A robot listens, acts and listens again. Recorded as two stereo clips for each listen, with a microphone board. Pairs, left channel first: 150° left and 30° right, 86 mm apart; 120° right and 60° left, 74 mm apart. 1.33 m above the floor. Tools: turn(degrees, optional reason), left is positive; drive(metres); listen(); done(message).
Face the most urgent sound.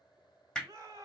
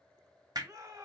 turn(degrees=20, reason="The shout: 20° left.")
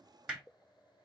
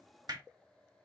listen()
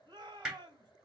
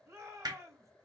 done("Found it: a shout, straight ahead.")